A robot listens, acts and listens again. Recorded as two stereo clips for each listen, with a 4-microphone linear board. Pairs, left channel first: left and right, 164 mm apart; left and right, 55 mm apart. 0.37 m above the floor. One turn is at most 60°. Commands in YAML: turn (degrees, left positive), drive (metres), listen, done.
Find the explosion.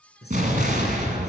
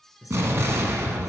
turn: -50
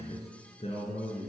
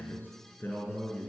listen: true
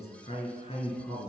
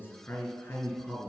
done: "I heard an explosion, but can't make it out now. It was about straight ahead or 80° right."